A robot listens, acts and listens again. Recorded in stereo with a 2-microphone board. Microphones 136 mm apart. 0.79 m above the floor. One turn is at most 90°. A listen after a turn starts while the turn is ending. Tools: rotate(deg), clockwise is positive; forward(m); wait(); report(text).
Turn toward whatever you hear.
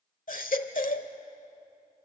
rotate(-70)
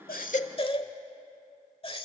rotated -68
rotate(-40)
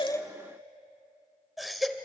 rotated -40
report("Found it: a baby crying, straight ahead.")